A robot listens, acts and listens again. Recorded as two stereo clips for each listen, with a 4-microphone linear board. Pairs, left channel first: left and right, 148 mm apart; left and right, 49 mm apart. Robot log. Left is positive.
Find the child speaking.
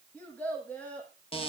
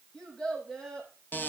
cmd yaw +30
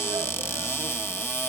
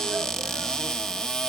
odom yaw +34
cmd idle
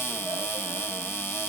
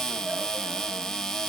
cmd idle
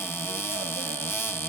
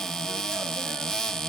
end: I heard a child speaking, but can't make it out now. It was about 25° right or 135° left.